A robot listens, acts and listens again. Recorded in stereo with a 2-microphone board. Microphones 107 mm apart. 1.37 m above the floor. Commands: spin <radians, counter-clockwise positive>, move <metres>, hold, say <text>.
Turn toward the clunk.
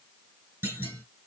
spin -0.26
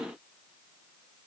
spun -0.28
hold
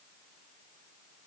say I heard a clunk, but can't make it out now. It was about straight ahead or 145° right.